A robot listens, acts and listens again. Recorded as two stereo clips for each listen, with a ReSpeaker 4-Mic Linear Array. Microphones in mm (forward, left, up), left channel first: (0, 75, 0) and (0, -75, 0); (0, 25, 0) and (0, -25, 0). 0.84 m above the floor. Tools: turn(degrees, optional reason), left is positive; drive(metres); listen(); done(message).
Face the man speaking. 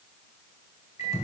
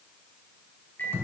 listen()
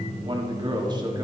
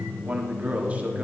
turn(degrees=-25, reason="The man speaking: about 25° right or 155° right.")
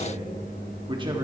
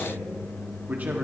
turn(degrees=-30, reason="The man speaking: about 30° right or 150° right.")
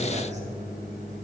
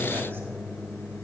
listen()
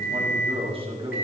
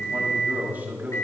turn(degrees=-35, reason="The man speaking: about 35° right or 145° right.")
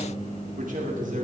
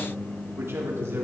turn(degrees=-120, reason="So it is at 120° right.")
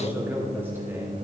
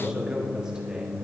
turn(degrees=-15, reason="The man speaking is now 15° right.")
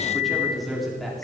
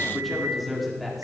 done("Facing the man speaking.")